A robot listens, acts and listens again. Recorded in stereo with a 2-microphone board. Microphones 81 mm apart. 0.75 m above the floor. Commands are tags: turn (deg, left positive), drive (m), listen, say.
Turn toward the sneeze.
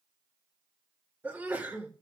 <turn deg="-25"/>
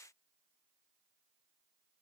<listen/>
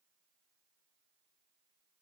<say>I heard a sneeze, but can't make it out now. It was about straight ahead or 130° right.</say>